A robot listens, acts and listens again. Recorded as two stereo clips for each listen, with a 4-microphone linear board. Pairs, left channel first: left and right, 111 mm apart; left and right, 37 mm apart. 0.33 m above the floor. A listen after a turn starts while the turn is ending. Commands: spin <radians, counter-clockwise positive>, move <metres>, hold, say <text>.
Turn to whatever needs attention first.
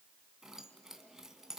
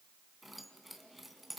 hold
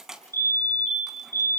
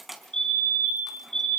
spin 0.35
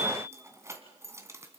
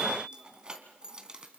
hold
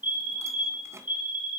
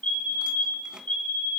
spin 2.36
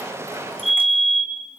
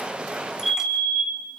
say Found it: a fire alarm, straight ahead.